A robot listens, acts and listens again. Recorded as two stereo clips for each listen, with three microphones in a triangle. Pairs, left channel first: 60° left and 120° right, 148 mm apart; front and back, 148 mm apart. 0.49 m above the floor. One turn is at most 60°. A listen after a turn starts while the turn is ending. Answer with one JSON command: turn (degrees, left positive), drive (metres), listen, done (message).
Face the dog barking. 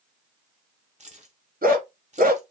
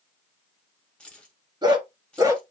{"turn": -60}
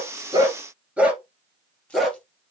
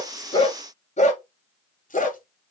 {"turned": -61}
{"turn": -30}
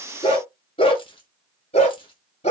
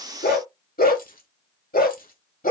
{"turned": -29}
{"turn": 15}
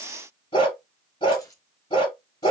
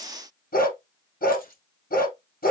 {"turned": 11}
{"done": "Facing the dog barking."}